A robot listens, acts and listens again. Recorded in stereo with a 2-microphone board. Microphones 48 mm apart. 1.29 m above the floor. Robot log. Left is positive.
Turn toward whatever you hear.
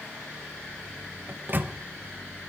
note: The microwave: about 40° right or 140° right.
cmd yaw -40
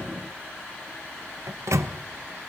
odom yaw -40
note: So it is at 100° right.
cmd yaw -100
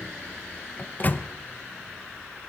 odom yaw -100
note: The microwave is now 35° left.
cmd yaw +35
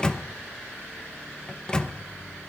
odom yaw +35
note: The microwave is now 15° left.
cmd yaw +15
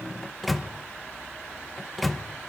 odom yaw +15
end: Facing the microwave, under 1 m away.